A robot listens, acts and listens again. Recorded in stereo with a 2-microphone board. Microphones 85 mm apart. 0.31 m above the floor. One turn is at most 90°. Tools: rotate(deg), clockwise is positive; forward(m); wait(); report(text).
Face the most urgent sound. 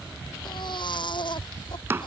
rotate(-65)
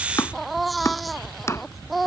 report("Facing the baby crying.")